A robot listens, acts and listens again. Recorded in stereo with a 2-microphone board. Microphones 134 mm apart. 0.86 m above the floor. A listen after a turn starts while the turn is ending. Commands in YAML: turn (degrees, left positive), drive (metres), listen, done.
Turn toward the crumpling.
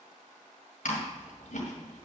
listen: true
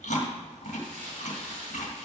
turn: -75
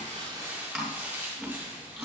turn: -15
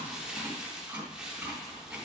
done: "Facing the crumpling."